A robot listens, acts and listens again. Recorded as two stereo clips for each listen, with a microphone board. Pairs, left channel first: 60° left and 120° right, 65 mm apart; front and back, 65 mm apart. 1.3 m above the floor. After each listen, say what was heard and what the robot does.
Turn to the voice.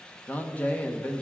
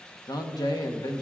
Found it: a man speaking, straight ahead.